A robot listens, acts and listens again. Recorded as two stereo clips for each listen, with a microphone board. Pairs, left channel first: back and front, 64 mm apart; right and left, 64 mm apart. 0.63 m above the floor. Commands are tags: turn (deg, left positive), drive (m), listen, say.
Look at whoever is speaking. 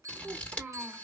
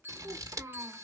<turn deg="70"/>
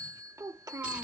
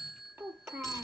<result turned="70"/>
<turn deg="35"/>
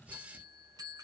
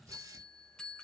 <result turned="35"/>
<listen/>
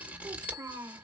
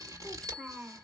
<turn deg="25"/>
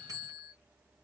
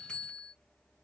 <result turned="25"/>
<listen/>
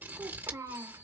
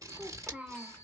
<turn deg="20"/>
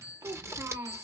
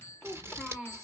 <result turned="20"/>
<say>Found it: a child speaking, straight ahead.</say>